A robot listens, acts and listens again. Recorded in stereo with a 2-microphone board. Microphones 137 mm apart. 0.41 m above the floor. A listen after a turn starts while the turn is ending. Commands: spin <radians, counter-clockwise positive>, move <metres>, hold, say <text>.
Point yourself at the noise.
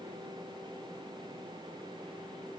hold
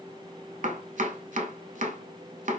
spin -1.22
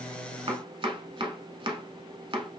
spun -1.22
spin -0.70
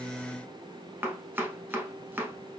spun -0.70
spin -0.26
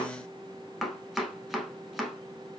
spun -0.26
say Found it: chopping, straight ahead.